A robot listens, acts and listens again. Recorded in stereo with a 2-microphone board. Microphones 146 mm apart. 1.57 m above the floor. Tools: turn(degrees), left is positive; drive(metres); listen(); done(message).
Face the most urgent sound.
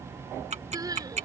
turn(degrees=-25)
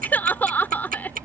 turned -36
turn(degrees=10)
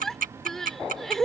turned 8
done("Facing the crying.")